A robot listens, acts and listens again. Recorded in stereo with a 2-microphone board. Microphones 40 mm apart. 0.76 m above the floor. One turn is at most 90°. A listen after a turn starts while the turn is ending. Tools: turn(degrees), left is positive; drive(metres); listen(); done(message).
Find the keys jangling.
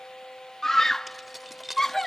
turn(degrees=30)
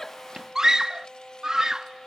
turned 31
listen()
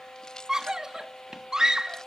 listen()
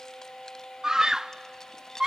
turn(degrees=90)
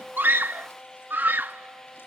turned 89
turn(degrees=75)
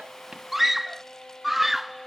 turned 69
turn(degrees=10)
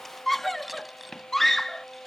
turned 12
done("Facing where the keys jangling came from. I can't hear it now.")